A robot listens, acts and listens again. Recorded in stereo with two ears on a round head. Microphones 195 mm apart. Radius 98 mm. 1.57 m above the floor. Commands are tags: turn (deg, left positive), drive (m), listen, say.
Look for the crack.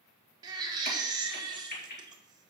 <turn deg="45"/>
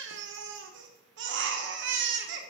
<listen/>
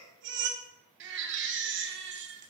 <say>I heard a crack, but can't make it out now. It was about straight ahead or 90° left.</say>